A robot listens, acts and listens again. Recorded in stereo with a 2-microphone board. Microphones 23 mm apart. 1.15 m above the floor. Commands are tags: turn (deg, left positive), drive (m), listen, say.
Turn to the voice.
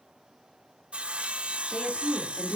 <turn deg="90"/>
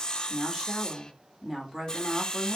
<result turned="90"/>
<turn deg="-15"/>
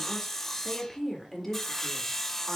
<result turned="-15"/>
<say>Found it: a woman speaking, straight ahead, 2 to 4 m away.</say>